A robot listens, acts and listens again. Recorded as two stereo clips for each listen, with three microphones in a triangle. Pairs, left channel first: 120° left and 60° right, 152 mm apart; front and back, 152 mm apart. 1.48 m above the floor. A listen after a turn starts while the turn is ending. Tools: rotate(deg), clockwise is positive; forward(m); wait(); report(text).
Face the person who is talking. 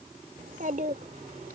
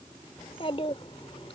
rotate(45)
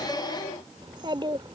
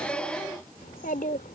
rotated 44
report("Facing the child speaking.")